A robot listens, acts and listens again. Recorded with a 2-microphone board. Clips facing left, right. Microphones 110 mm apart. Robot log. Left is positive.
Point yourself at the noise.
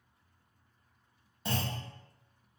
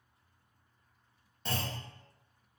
cmd yaw +30
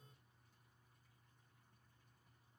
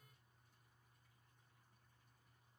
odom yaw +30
cmd idle
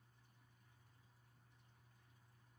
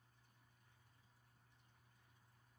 end: I heard a clunk, but can't make it out now. It was about 25° right or 145° left.